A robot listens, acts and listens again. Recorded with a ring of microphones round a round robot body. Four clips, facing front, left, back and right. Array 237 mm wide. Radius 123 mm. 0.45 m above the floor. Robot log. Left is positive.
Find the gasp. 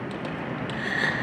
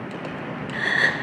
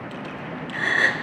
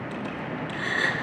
note: The gasp: 145° left.
cmd yaw +145
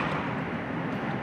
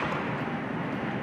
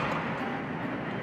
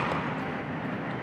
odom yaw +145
end: I heard a gasp from this way, but can't make it out now.